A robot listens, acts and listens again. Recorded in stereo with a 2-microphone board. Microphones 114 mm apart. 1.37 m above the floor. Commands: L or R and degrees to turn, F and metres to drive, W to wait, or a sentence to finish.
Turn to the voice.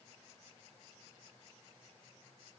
W
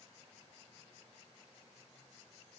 W
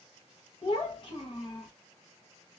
L45
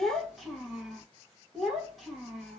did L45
Found it: a child speaking, straight ahead, 1 to 2 m away.